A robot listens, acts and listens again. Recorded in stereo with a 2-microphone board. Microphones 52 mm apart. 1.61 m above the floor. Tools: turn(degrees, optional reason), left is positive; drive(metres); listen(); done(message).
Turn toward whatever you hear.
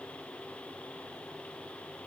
listen()
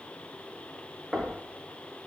turn(degrees=-30)
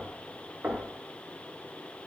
turn(degrees=-150, reason="So it is at 150° right.")
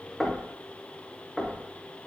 done("Found it: knocking, straight ahead.")